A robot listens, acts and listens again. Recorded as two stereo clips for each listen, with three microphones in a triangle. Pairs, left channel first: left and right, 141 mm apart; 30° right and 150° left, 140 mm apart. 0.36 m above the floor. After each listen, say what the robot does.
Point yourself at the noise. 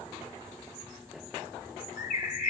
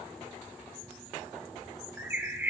Turn 75° left.
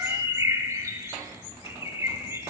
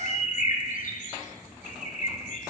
Turn 20° right.
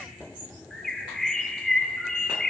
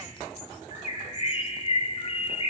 Found it: a bird, straight ahead, under 1 m away.